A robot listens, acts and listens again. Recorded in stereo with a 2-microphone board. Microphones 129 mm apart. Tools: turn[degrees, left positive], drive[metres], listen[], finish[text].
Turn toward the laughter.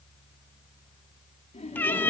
Thought: The laughter: about 60° left or 120° left.
Action: turn[60]
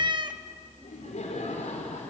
Thought: So it is at 65° left.
Action: turn[65]
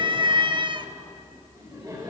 Thought: The laughter is now 25° right.
Action: turn[-25]
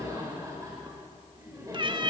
Thought: The laughter is now 25° right.
Action: turn[-25]
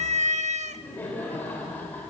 Thought: The laughter is now 15° left.
Action: turn[15]
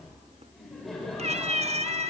Action: finish[Found it: laughter, straight ahead.]